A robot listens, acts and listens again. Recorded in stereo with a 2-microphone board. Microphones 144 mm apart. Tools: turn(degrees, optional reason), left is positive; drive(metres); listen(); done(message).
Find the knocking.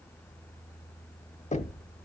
turn(degrees=55, reason="The knocking: about 55° left or 125° left.")
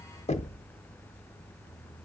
turn(degrees=55, reason="So it is at 55° left.")
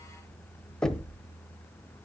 done("Found it: knocking, straight ahead.")